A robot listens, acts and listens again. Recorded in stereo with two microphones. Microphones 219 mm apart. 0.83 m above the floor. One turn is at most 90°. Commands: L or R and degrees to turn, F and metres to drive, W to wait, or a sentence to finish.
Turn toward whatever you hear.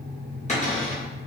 L35
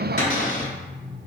L90
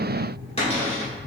L30
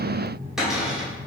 Found it: a cupboard door, straight ahead, 1 to 2 m away.